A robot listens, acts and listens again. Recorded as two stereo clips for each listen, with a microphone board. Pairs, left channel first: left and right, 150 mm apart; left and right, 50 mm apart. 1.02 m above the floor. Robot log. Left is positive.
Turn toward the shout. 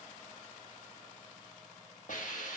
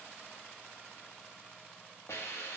cmd idle
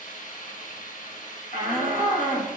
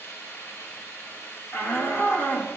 note: The shout: about 65° left or 115° left.
cmd yaw +65
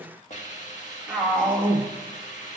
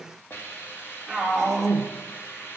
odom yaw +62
end: Found it: a shout, straight ahead, 1 to 2 m away.